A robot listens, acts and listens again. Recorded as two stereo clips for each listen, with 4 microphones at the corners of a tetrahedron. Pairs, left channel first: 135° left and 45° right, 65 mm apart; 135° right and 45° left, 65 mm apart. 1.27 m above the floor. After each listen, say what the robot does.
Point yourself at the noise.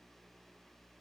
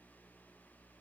Keep listening.
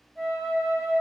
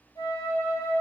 Turn 140° right.
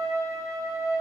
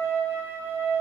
Turn 10° right.
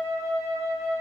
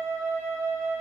Facing the flute.